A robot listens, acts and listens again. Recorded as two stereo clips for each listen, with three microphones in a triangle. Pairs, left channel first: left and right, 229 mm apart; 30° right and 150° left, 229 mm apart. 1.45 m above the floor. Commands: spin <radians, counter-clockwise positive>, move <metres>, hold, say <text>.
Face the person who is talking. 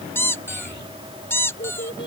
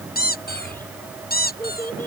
spin 0.87
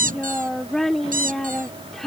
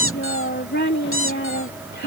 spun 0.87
say Found it: a child speaking, straight ahead.